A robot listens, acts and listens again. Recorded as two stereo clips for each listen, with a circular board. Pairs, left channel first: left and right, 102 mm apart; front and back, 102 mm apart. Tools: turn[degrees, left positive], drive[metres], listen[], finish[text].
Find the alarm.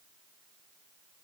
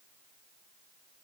Action: listen[]
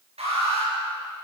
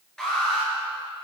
Thought: The alarm: 85° right.
Action: turn[-85]
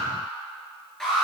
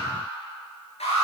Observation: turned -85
Action: finish[Found it: an alarm, straight ahead.]